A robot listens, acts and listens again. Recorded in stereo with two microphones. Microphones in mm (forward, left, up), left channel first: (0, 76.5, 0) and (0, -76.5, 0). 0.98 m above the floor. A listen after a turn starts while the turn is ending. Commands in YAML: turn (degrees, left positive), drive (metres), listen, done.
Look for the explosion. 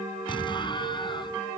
turn: 30
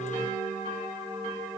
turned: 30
listen: true
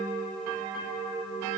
done: "I heard an explosion, but can't make it out now. It was about straight ahead or 120° left."